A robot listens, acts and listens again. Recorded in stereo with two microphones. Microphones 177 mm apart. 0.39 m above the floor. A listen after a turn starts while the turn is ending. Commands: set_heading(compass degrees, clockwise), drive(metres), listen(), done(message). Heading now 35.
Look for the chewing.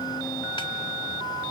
listen()
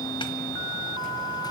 listen()
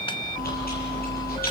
set_heading(335)
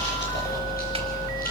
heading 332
set_heading(277)
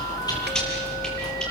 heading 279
done("Found it: chewing, straight ahead, over 4 m away.")